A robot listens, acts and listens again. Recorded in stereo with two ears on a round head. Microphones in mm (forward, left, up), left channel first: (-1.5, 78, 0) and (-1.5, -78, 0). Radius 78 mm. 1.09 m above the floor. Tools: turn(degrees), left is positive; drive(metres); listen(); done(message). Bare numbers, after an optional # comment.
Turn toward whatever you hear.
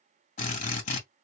# The drill: about 45° left or 135° left.
turn(45)
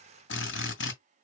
# So it is at 95° left.
turn(95)
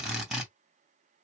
done("Facing the drill, 2 to 4 m away.")